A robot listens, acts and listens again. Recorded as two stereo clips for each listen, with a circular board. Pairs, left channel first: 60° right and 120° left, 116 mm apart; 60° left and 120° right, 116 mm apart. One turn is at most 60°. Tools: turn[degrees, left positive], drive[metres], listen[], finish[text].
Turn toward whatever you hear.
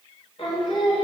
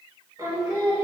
Thought: The singing: 70° right.
Action: turn[-60]
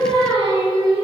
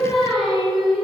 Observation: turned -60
Thought: The singing is now 35° right.
Action: turn[-35]
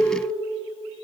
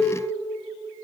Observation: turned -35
Thought: The singing is now 10° right.
Action: turn[-10]
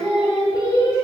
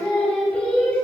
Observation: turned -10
Thought: The singing is now 15° right.
Action: turn[-15]
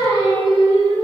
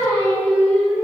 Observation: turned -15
Thought: The singing is now 10° right.
Action: turn[-10]
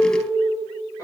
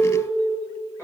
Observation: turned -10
Action: finish[Facing the singing, 2 to 4 m away.]